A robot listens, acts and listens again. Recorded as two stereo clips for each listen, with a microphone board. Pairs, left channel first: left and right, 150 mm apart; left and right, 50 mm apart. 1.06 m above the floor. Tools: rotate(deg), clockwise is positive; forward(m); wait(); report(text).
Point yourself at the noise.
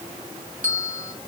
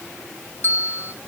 rotate(60)
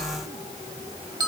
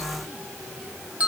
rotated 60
rotate(30)
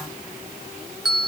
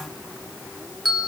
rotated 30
report("Found it: a bell, straight ahead.")